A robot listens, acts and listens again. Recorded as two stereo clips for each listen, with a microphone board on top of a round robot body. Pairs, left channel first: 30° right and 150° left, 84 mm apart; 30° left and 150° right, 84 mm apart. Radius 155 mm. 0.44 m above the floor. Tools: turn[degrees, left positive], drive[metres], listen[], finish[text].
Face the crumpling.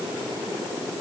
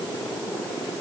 Action: listen[]
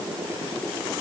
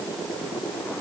Action: listen[]
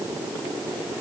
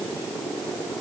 Action: finish[I can't make out crumpling to turn to.]